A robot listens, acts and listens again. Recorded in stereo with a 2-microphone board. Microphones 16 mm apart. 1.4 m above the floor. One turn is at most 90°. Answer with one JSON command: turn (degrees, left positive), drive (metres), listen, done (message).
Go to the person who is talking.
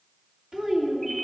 {"turn": -55}
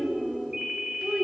{"turn": -70}
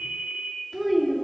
{"turn": -15}
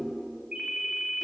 {"drive": 1.0}
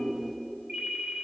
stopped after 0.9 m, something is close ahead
{"done": "I am next to the child speaking."}